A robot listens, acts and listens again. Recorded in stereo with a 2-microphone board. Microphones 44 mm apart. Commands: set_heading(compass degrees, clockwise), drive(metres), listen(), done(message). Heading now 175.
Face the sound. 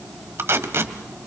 set_heading(235)
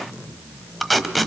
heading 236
done("Found it: tape being pulled, straight ahead.")